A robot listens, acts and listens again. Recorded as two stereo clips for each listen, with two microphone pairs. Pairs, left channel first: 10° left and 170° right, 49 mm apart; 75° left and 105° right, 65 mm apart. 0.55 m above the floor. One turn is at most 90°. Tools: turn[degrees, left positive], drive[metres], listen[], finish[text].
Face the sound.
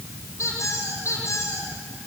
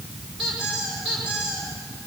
Thought: The squeak: 15° right.
Action: turn[-15]
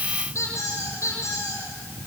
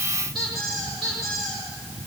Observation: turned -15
Action: finish[Facing the squeak, over 4 m away.]